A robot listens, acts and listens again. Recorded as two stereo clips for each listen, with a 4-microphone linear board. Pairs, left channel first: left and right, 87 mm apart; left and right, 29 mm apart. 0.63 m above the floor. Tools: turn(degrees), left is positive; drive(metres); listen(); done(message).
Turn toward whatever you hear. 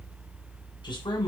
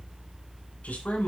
turn(degrees=65)
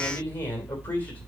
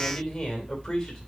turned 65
turn(degrees=20)
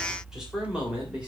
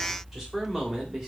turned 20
turn(degrees=-10)
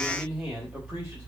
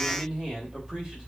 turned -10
turn(degrees=-10)
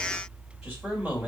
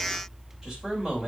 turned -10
turn(degrees=-10)
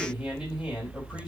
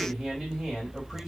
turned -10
done("Found it: a man speaking, straight ahead, 2 to 4 m away.")